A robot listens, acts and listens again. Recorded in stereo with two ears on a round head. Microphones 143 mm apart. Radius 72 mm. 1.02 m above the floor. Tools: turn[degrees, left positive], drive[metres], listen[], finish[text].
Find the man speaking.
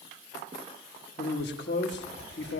Thought: The man speaking: about 75° left or 105° left.
Action: turn[75]
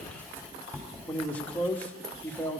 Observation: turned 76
Thought: So it is at 10° left.
Action: turn[10]
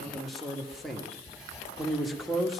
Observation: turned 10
Action: finish[Found it: a man speaking, straight ahead.]